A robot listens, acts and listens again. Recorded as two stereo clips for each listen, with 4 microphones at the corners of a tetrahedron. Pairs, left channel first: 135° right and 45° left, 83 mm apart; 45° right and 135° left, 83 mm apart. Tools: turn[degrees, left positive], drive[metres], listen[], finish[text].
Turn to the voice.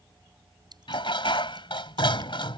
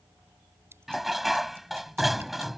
Action: listen[]
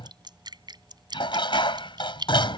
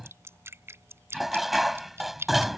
Action: listen[]
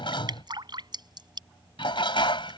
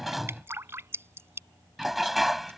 Action: finish[I can't make out anyone speaking, only dripping and dishes clattering.]